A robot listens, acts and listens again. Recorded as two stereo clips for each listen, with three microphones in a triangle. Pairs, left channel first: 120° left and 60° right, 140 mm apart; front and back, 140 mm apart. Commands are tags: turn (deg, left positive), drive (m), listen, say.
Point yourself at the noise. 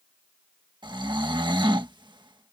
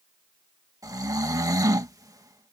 <turn deg="-115"/>
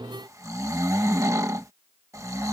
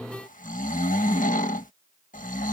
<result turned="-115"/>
<turn deg="10"/>
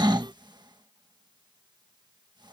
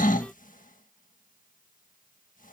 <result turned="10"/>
<say>Found it: snoring, straight ahead.</say>